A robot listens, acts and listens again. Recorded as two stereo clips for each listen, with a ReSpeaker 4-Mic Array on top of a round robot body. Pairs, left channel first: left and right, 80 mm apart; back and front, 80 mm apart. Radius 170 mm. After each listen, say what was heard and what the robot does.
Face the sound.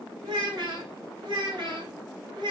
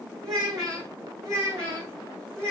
The child speaking: 60° right. Turn 60° right.
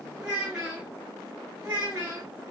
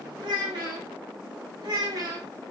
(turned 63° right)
The child speaking is now 25° right. Turn 25° right.
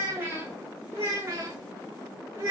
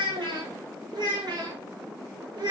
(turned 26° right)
The child speaking is now 30° right. Turn 30° right.
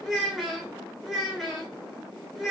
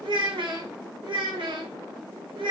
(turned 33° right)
Facing the child speaking, 1 to 2 m away.